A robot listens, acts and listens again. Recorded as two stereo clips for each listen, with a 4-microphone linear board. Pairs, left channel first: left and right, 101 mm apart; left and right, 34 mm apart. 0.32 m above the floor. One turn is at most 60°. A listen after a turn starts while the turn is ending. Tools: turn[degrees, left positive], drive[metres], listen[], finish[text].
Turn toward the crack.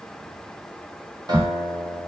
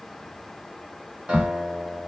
Action: turn[-60]
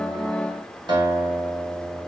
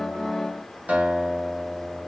Thought: Nothing new. It was at 30° right.
Action: turn[-30]
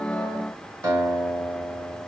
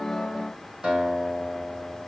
Action: finish[I heard a crack from this way, but can't make it out now.]